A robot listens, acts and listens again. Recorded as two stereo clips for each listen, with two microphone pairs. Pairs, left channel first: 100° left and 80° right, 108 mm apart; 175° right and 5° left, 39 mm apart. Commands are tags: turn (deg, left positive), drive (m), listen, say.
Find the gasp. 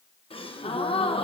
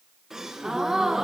<turn deg="80"/>
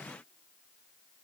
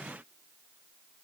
<say>Facing where the gasp came from. I can't hear it now.</say>